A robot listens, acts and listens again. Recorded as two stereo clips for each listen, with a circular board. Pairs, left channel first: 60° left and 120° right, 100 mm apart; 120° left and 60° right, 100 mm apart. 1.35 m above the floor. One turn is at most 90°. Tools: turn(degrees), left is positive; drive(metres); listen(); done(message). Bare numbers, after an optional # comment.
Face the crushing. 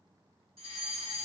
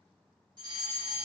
listen()
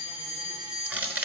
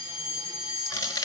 # The crushing: 170° left.
turn(90)
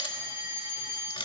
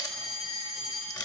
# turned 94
# The crushing is now 75° left.
turn(75)
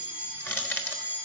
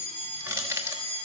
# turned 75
done("Found it: crushing, straight ahead, 1 to 2 m away.")